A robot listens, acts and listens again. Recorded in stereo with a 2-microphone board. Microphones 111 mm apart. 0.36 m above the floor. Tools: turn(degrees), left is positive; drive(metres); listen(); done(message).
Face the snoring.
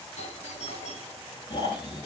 turn(degrees=45)
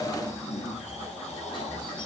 turn(degrees=90)
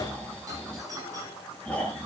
turn(degrees=10)
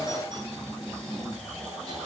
done("Found it: snoring, straight ahead, over 4 m away.")